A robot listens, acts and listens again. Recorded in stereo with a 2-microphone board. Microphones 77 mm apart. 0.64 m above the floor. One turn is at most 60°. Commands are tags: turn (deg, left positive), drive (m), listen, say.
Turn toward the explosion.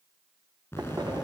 <turn deg="30"/>
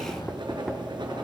<listen/>
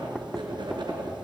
<say>I heard an explosion, but can't make it out now. It was about straight ahead or 120° left.</say>